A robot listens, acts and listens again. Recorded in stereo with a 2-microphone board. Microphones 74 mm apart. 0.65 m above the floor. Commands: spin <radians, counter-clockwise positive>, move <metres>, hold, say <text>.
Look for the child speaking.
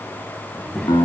spin 0.52
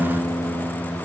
hold
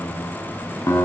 spin -0.26
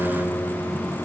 hold
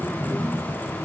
spin 0.26
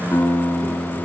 hold
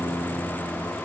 hold
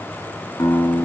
say Facing where the child speaking came from. I can't hear it now.